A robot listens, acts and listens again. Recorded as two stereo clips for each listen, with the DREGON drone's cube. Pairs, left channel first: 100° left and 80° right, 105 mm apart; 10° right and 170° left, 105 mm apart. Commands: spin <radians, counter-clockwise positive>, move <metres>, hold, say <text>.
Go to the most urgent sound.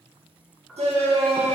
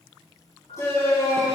spin -1.31
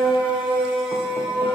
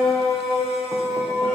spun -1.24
move 1.0
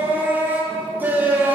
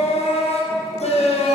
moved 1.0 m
move 1.0
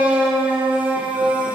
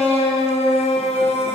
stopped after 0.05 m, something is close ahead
say Arrived at the shout, straight ahead.